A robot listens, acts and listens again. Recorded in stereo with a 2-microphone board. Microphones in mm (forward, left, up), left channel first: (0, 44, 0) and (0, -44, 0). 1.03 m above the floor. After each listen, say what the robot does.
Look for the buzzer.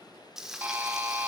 Turn 20° right.
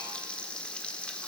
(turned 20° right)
Keep listening.
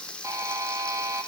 Turn 140° right.
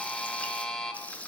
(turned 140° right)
Turn 10° left.
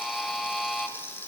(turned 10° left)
Facing the buzzer, under 1 m away.